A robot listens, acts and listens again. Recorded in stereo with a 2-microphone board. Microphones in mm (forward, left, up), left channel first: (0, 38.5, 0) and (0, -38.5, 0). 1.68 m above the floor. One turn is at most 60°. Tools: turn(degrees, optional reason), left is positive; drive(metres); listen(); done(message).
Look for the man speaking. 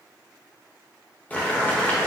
listen()
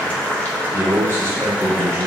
turn(degrees=-35, reason="The man speaking: about 35° right or 145° right.")
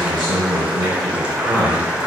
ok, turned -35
turn(degrees=-60, reason="So it is at 105° right.")
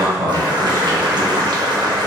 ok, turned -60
turn(degrees=-45, reason="The man speaking is now 45° right.")
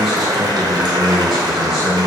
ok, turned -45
done("Facing the man speaking, 1 to 2 m away.")